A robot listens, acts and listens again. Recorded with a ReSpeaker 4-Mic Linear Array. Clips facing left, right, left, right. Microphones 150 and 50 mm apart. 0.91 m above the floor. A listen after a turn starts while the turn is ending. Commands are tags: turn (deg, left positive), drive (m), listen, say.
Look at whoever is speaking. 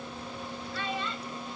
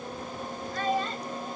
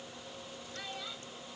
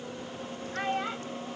<turn deg="-45"/>
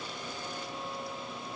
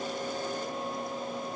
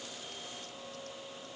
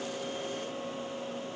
<listen/>
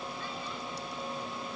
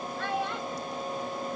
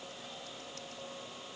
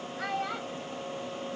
<turn deg="-90"/>
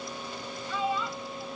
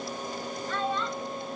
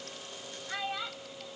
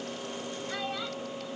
<turn deg="10"/>
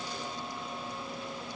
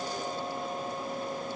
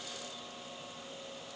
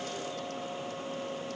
<listen/>
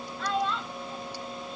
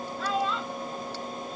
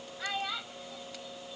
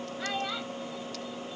<say>Found it: a child speaking, straight ahead.</say>